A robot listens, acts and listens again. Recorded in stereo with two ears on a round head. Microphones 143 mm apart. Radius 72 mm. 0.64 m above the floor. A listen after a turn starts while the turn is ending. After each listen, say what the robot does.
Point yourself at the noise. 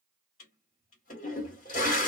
Turn 55° left.
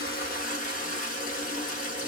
Turn 60° left.
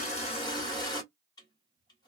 Turn 30° left.
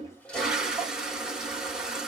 Facing the toilet flushing, 1 to 2 m away.